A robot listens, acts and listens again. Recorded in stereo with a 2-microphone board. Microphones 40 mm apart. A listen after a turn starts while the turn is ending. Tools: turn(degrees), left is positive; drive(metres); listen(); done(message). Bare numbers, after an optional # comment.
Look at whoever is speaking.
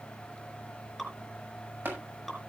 listen()
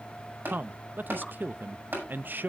# The man speaking: about 55° right or 125° right.
turn(-55)
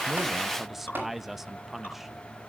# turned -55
# So it is at 10° right.
turn(-10)
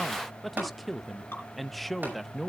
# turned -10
done("Found it: a man speaking, straight ahead, under 1 m away.")